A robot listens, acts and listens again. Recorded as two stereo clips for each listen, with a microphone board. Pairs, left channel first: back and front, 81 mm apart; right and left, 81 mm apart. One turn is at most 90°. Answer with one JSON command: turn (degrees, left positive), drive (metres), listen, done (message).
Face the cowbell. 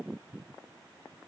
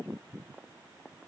{"listen": true}
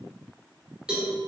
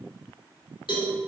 {"turn": -80}
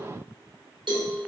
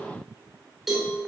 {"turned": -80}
{"done": "Facing the cowbell."}